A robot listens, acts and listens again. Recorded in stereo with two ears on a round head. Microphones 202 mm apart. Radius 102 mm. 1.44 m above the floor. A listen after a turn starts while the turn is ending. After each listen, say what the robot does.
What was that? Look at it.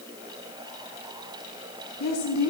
Turn 90° left.
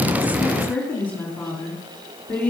Turn 10° left.
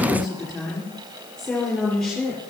Facing the woman speaking.